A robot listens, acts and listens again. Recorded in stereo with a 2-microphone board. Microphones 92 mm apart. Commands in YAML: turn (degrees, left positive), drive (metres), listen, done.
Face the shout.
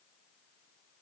listen: true
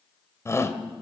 turn: 30
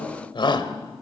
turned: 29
turn: 120
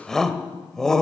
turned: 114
done: "Facing the shout, 2 to 4 m away."